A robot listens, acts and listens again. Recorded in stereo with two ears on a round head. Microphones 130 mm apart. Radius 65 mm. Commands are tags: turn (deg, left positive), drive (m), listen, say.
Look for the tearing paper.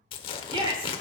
<turn deg="40"/>
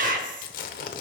<turn deg="105"/>
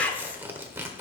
<turn deg="-15"/>
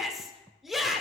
<listen/>
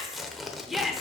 <say>Facing the tearing paper, 1 to 2 m away.</say>